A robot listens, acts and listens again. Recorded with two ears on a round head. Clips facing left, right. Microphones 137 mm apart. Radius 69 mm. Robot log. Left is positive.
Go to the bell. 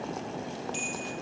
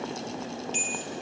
note: The bell: about 25° right or 155° right.
cmd yaw -25
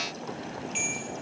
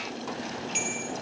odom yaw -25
note: So it is at 130° right.
cmd yaw -130
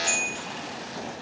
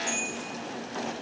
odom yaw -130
note: The bell is now 20° left.
cmd yaw +20
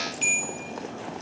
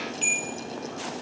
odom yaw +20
cmd fwd 1.0
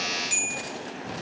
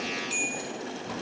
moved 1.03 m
note: The bell is now 10° left.
cmd yaw +10
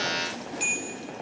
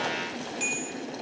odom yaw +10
cmd fwd 1.0
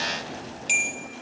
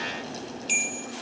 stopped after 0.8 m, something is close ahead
note: The bell is now 10° left.
cmd yaw +10
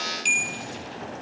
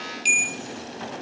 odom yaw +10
end: I am next to the bell.